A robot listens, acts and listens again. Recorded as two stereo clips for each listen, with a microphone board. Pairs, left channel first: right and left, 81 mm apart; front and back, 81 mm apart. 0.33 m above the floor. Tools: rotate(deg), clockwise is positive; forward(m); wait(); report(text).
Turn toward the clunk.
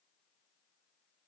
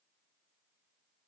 wait()
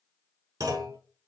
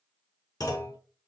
rotate(-45)
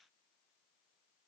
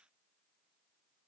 report("Facing where the clunk came from. I can't hear it now.")